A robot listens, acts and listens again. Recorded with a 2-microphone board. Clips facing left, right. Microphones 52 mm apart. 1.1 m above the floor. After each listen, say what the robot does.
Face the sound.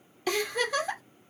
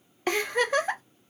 Turn 35° right.
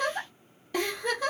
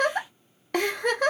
Turn 110° right.
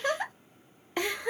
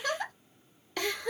Turn 25° left.
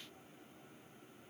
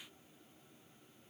Keep listening.
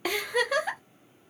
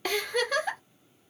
Turn 10° left.
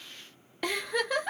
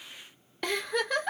Facing the giggle, under 1 m away.